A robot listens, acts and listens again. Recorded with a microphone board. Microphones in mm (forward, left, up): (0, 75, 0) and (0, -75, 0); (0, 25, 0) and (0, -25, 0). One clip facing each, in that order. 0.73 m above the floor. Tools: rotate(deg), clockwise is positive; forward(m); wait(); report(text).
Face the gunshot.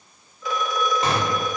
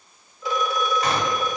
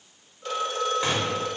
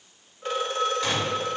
rotate(-30)
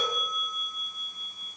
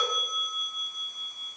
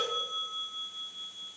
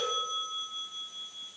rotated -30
wait()
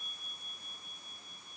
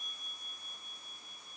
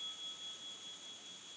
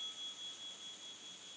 report("I heard a gunshot, but can't make it out now. It was about straight ahead or 120° left.")